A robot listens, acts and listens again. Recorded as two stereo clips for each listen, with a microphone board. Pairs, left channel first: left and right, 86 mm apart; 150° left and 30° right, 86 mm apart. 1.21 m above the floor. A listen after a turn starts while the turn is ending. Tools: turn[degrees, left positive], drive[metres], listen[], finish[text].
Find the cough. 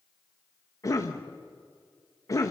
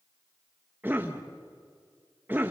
Thought: The cough: 40° left.
Action: turn[40]
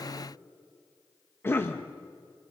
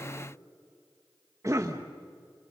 Thought: The cough is now 25° left.
Action: turn[25]
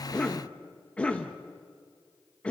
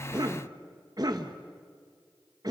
Thought: The cough is now 10° left.
Action: turn[10]
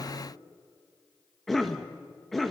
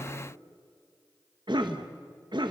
Action: finish[Facing the cough, 1 to 2 m away.]